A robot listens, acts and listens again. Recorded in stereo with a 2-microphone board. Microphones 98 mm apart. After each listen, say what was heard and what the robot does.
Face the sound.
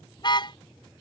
The car horn: about 50° left or 130° left. Turn 50° left.
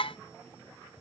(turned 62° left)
So it is at 65° left. Turn 65° left.
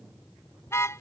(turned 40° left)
The car horn is now 25° left. Turn 25° left.
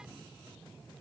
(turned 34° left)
Keep listening.
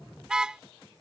The car horn is now 10° right. Turn 10° right.
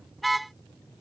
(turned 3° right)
Facing the car horn.